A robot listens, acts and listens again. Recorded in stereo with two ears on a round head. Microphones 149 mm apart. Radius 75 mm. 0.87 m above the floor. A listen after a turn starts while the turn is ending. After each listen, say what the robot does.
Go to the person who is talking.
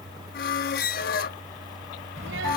Turn 90° right.
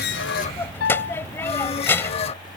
Turn 15° left.
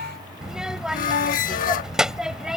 Drive 1.0 m forward.
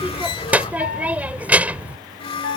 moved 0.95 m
Turn 10° right.
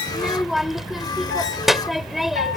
Drive 1.0 m forward.
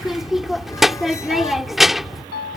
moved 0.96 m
Drive 1.0 m forward.
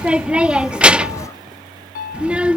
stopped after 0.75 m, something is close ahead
I am next to the child speaking.